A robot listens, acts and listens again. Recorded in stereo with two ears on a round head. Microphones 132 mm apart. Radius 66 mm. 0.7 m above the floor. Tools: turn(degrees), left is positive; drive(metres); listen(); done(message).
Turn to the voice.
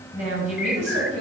turn(degrees=-55)
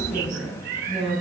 done("Found it: a woman speaking, straight ahead.")